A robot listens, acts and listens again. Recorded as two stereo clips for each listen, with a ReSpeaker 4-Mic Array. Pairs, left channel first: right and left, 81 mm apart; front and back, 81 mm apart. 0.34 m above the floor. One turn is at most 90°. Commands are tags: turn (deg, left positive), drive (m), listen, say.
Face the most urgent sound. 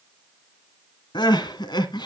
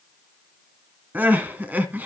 <turn deg="-90"/>
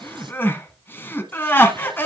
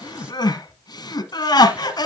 <turn deg="-25"/>
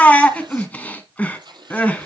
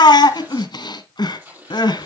<turn deg="-20"/>
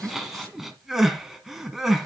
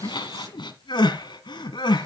<say>Found it: crying, straight ahead.</say>